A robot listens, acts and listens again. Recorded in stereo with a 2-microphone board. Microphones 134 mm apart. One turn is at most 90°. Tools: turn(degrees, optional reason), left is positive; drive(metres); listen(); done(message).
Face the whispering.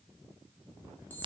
listen()
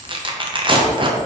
listen()
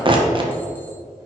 done("I can't make out whispering to turn to.")